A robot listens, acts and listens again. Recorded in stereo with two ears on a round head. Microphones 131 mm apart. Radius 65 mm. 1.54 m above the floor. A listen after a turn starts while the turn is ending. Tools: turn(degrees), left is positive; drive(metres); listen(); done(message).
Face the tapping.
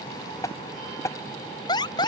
turn(degrees=20)
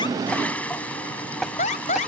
done("Found it: tapping, straight ahead.")